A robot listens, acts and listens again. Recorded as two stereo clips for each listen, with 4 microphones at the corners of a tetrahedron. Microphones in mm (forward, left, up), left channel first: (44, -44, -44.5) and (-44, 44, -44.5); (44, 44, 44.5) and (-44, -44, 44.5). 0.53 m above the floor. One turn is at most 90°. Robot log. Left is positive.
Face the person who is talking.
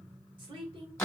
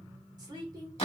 note: The woman speaking: 175° left.
cmd yaw +90
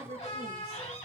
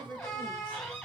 note: The woman speaking is now 120° left.
cmd yaw +90
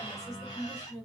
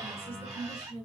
note: The woman speaking is now 80° left.
cmd yaw +80
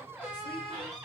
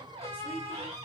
cmd idle
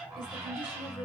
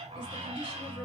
cmd idle
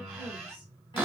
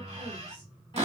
end: Facing where the woman speaking came from. I can't hear it now.